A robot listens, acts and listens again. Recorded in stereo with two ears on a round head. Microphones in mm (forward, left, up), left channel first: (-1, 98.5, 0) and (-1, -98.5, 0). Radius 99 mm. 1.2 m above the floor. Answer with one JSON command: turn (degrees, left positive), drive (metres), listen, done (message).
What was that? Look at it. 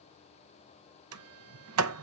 {"turn": -90}
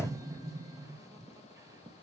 {"turn": -15}
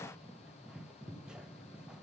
{"done": "Facing the sliding door."}